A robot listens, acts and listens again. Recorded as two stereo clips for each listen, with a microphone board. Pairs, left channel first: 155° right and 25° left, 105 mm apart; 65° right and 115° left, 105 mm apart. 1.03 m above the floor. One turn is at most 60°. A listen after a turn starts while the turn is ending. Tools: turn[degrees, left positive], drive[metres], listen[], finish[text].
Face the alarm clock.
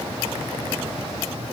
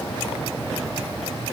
Action: listen[]
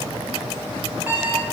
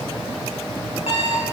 Thought: The alarm clock: 50° right.
Action: turn[-50]
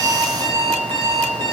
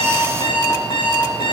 Thought: The alarm clock is now 30° right.
Action: turn[-30]
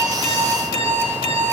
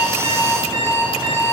Action: finish[Found it: an alarm clock, straight ahead, over 4 m away.]